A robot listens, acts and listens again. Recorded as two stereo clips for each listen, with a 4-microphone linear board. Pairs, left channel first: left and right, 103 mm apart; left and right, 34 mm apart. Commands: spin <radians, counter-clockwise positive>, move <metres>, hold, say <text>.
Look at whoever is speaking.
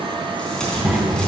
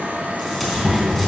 spin 0.52
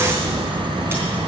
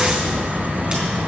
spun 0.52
spin 2.53
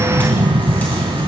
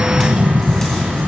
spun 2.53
spin -0.44
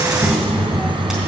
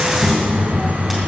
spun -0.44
say Found it: a child speaking, straight ahead.